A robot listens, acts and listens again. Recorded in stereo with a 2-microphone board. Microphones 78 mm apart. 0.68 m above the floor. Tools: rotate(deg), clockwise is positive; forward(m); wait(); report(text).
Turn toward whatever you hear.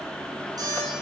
rotate(55)
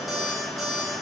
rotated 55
report("Facing the alarm clock.")